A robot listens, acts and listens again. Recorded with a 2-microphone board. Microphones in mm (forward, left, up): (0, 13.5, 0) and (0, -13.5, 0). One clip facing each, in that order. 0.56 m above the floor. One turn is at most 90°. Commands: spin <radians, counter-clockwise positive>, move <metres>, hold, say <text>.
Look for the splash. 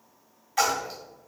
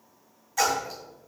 spin 0.70
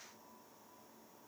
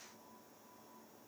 hold
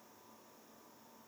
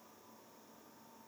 say I heard a splash, but can't make it out now. It was about straight ahead or 100° left.